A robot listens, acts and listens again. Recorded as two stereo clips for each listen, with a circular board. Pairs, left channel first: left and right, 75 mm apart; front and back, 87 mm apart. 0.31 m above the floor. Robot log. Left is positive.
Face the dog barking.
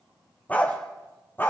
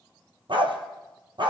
note: The dog barking: 150° left.
cmd yaw +150
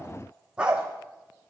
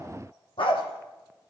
note: The dog barking is now 10° right.
cmd yaw -10
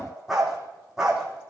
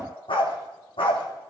end: Found it: a dog barking, straight ahead, 2 to 4 m away.